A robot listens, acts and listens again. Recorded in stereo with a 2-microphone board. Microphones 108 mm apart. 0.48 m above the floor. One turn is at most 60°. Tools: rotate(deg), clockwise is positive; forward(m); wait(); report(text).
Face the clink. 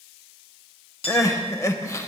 rotate(-60)
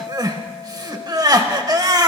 report("Found it: a clink, straight ahead.")